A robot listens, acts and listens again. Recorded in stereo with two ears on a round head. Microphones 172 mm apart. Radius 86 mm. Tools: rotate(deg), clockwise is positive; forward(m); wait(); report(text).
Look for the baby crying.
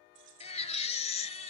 rotate(-35)
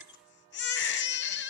rotate(-110)
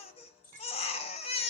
rotate(-30)
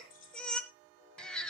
report("Found it: a baby crying, straight ahead.")